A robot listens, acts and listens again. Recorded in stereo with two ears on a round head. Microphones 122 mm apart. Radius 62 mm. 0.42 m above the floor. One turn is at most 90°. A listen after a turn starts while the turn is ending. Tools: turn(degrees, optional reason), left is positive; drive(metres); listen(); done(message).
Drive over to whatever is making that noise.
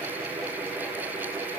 listen()
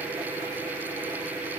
listen()
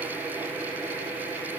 done("I can't make out anything to turn to.")